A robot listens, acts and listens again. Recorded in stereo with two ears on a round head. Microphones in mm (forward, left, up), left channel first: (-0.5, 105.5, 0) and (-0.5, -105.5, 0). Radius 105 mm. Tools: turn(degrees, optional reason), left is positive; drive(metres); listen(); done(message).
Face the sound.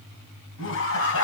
turn(degrees=60, reason="The laughter: about 60° left or 120° left.")
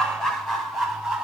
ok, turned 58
done("Facing the laughter.")